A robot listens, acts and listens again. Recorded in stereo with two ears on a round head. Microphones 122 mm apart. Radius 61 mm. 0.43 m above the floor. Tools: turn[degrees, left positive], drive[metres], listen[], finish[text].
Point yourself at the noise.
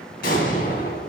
Thought: The explosion: about 75° left or 105° left.
Action: turn[75]
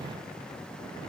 Action: listen[]
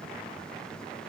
Action: finish[I heard an explosion, but can't make it out now. It was about straight ahead or 30° left.]